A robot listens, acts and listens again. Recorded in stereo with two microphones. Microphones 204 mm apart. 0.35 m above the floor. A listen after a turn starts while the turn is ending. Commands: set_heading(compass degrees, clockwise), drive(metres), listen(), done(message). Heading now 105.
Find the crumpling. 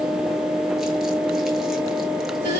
listen()
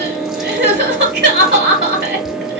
listen()
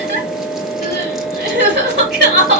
done("I can't make out crumpling to turn to.")